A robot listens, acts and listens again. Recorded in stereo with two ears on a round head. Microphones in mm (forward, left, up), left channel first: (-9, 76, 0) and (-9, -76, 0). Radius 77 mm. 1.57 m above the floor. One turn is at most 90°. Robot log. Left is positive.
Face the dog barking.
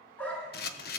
cmd yaw +30
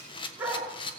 note: So it is at 15° right.
cmd yaw -15
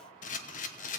cmd idle
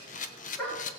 note: The dog barking is now 10° left.
cmd yaw +10
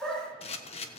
end: Found it: a dog barking, straight ahead.